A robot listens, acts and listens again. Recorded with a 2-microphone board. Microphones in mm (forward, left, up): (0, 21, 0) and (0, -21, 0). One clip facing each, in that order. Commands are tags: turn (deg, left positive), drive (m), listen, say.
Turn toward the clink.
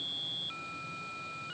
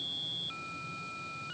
<listen/>
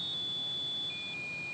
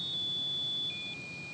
<listen/>
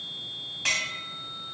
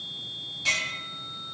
<turn deg="65"/>
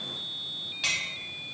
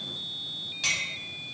<turn deg="15"/>
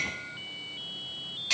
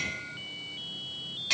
<say>Facing the clink, 1 to 2 m away.</say>